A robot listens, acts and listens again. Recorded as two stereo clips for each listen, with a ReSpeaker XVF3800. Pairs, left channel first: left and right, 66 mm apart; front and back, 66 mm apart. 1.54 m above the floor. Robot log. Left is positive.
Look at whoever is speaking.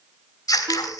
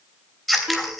cmd idle
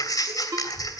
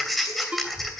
note: The child speaking: 15° left.
cmd yaw +15
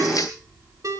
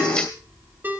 end: Found it: a child speaking, straight ahead.